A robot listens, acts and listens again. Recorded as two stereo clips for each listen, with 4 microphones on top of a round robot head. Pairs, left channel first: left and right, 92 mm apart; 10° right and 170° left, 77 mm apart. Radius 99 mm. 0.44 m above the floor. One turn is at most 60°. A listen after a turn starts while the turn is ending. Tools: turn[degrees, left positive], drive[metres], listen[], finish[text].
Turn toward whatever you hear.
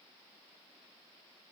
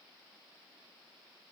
Action: listen[]
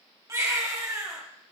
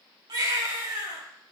Thought: The baby crying: 145° right.
Action: turn[-60]
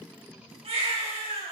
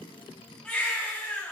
Thought: The baby crying is now 90° right.
Action: turn[-60]
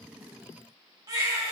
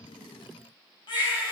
Thought: The baby crying is now 35° right.
Action: turn[-35]
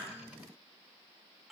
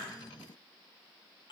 Action: finish[Facing the baby crying, 2 to 4 m away.]